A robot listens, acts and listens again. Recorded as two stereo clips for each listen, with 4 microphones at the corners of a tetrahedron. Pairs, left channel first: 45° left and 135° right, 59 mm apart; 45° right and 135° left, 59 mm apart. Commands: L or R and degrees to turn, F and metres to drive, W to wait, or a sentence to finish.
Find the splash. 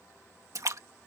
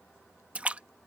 R155
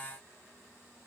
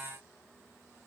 I heard a splash from this way, but can't make it out now.